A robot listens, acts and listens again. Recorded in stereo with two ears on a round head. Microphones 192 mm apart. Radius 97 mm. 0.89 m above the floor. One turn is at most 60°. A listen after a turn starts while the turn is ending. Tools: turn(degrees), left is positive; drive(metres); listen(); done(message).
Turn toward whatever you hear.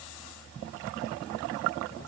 listen()
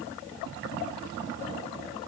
listen()
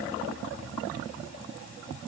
done("I can't make out anything to turn to.")